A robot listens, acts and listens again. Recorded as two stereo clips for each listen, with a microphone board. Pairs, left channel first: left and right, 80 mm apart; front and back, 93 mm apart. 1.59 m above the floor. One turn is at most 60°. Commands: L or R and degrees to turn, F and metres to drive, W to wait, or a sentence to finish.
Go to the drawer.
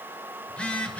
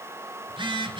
W
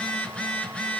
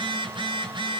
W
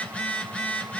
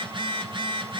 I can't make out a drawer to turn to.